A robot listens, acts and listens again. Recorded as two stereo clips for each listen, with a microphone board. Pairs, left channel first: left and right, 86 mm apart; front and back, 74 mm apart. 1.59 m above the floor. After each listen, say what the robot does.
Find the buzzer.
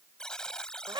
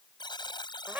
Turn 10° left.
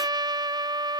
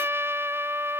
Keep listening.
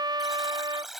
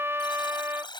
Found it: a buzzer, straight ahead.